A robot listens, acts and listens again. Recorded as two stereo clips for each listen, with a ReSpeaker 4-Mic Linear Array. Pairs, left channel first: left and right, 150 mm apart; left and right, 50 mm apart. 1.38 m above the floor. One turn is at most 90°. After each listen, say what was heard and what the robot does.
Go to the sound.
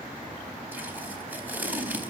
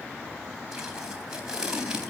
Turn 30° right.
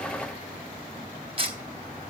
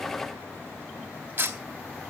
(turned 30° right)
So it is at 140° right. Turn 90° right.
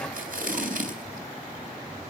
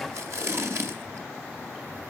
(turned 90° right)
The tape being pulled is now 70° right. Turn 70° right.
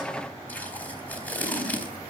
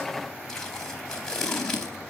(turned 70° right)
The tape being pulled is now 10° left. Turn 10° left.
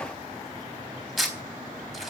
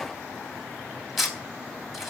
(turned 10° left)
Drive 1.0 m forward.
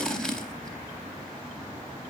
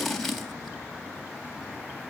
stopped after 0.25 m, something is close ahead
Blocked. The tape being pulled is further on, straight ahead.